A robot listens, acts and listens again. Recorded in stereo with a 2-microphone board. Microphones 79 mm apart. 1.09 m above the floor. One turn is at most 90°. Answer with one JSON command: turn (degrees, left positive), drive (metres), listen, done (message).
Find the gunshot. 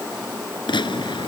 {"turn": 90}
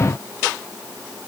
{"done": "Facing where the gunshot came from. I can't hear it now."}